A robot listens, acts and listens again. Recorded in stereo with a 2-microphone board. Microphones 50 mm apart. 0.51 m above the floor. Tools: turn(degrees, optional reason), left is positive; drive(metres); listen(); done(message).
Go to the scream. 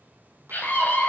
turn(degrees=35, reason="The scream: about 35° left or 145° left.")
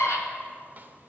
turn(degrees=105, reason="So it is at 105° left.")
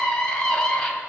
turn(degrees=15, reason="The scream is now 15° left.")
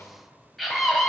drive(metres=1.0)
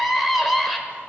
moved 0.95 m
drive(metres=1.0)
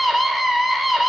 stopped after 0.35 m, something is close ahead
done("I am next to the scream.")